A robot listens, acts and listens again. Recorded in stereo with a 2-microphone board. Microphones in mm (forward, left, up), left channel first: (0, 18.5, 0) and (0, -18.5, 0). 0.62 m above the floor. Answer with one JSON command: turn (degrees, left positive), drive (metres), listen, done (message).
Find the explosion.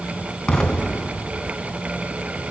{"turn": 15}
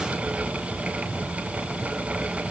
{"listen": true}
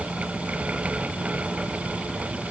{"done": "I heard an explosion, but can't make it out now. It was about straight ahead or 150° left."}